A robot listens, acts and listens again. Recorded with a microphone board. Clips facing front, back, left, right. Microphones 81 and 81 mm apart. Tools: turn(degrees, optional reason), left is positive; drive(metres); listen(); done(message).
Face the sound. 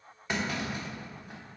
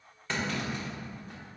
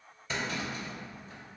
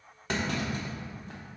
turn(degrees=-75, reason="The clunk: 75° right.")
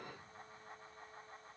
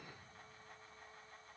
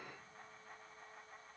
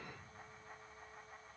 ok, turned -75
done("Facing where the clunk came from. I can't hear it now.")